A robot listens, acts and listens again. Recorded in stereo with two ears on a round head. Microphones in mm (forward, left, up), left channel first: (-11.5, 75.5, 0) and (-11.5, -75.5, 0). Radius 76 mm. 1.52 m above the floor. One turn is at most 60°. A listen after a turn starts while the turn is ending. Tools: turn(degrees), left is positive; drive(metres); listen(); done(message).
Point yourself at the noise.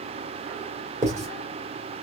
turn(degrees=-20)
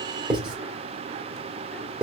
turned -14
done("Facing the writing, 2 to 4 m away.")